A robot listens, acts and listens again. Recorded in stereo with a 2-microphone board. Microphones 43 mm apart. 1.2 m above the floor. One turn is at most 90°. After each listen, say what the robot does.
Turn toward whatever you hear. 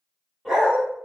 Turn 30° right.
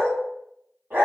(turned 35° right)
Turn 90° right.
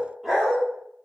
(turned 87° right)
Facing the dog barking.